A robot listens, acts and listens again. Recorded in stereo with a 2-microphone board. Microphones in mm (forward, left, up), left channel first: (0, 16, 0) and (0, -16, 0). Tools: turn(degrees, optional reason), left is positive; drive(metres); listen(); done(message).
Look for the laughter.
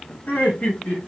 turn(degrees=55, reason="The laughter: about 55° left or 125° left.")
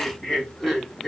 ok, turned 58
turn(degrees=10, reason="So it is at 10° left.")
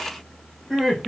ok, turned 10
turn(degrees=-10, reason="The laughter is now 10° right.")
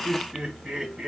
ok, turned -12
turn(degrees=-10, reason="The laughter is now 10° right.")
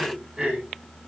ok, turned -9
turn(degrees=-15, reason="The laughter is now 15° right.")
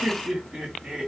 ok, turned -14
turn(degrees=-20, reason="The laughter is now 20° right.")
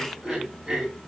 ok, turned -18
done("Facing the laughter, 2 to 4 m away.")